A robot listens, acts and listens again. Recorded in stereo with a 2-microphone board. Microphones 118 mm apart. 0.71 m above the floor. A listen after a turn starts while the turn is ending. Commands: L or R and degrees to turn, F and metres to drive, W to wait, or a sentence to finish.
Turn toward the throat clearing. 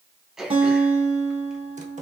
R30
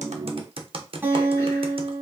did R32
W
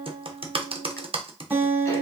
W
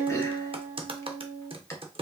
I heard throat clearing, but can't make it out now. It was about 25° left or 145° right.